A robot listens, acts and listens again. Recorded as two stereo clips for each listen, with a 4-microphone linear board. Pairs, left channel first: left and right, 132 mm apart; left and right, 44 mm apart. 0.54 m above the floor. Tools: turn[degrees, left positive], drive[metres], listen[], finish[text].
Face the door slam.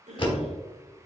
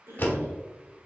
Thought: The door slam: about 40° left or 140° left.
Action: turn[40]
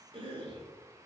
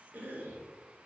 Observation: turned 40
Action: listen[]
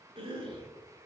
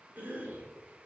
Action: finish[I heard a door slam, but can't make it out now. It was about straight ahead or 100° left.]